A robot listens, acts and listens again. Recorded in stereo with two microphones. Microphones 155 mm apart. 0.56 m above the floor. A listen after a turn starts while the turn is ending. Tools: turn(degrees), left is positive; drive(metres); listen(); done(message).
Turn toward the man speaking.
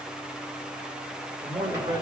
turn(degrees=-25)
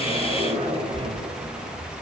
listen()
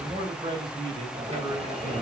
turn(degrees=-30)
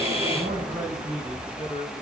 turn(degrees=-130)
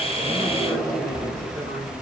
listen()
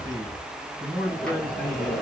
turn(degrees=-15)
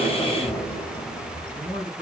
done("Found it: a man speaking, straight ahead, 2 to 4 m away.")